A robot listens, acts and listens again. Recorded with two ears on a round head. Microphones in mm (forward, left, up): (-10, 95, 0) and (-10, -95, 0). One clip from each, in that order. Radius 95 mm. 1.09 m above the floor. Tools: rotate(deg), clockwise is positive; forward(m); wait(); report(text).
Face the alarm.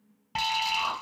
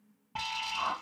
rotate(-90)
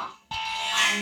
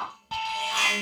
report("Found it: an alarm, straight ahead.")